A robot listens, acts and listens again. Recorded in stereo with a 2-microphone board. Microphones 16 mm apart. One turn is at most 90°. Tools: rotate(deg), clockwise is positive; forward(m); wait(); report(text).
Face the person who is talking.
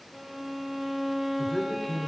rotate(-30)
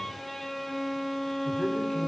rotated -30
wait()
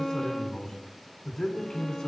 rotate(-90)
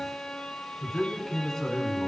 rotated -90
rotate(-60)
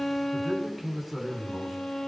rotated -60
rotate(-15)
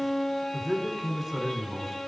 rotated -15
report("Facing the man speaking, 2 to 4 m away.")